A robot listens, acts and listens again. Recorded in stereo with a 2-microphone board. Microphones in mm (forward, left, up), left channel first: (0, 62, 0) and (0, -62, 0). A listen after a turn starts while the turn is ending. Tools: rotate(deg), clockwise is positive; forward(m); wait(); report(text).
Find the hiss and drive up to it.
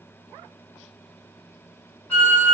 wait()
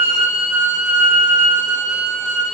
wait()
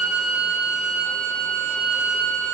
report("I can't make out a hiss to turn to.")